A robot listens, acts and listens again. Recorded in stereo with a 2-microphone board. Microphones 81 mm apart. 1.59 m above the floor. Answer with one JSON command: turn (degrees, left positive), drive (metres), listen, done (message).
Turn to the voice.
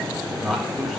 {"turn": 30}
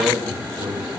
{"turn": -30}
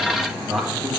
{"done": "Found it: a man speaking, straight ahead, 1 to 2 m away."}